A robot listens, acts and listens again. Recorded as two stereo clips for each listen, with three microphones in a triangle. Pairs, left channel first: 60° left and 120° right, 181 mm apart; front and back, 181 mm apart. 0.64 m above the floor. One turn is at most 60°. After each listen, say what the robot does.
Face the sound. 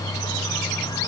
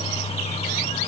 Keep listening.
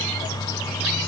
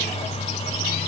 Keep listening.
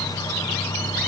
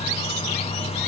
I can't make out anything to turn to.